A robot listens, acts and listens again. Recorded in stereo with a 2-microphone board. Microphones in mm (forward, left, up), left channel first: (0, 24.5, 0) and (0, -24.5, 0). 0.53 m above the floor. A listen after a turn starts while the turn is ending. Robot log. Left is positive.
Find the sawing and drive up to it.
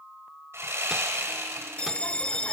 note: The sawing: about 65° right or 115° right.
cmd yaw -65
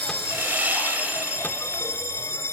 note: So it is at 40° right.
cmd yaw -40
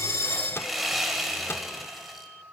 cmd fwd 1.0
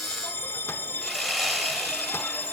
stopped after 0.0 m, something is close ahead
end: Something is in my way. I am facing the sawing but have not reached it.